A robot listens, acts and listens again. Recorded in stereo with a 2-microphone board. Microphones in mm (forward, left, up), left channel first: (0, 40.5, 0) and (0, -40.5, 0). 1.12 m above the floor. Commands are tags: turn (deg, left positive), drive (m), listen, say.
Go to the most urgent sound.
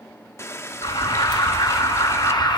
<turn deg="65"/>
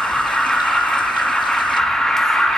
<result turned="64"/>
<drive m="1.0"/>
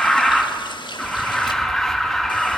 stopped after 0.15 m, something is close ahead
<say>Something is in my way. I am facing the alarm but have not reached it.</say>